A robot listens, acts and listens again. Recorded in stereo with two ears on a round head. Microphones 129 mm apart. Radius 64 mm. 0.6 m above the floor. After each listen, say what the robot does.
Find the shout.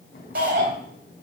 Turn 90° right.
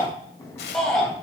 Found it: a shout, straight ahead, 2 to 4 m away.